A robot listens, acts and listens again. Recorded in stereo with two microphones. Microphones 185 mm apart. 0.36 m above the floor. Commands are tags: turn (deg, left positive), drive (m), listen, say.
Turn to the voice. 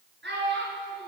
<turn deg="-70"/>
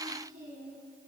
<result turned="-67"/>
<turn deg="-45"/>
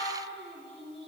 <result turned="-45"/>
<say>Found it: a child speaking, straight ahead, over 4 m away.</say>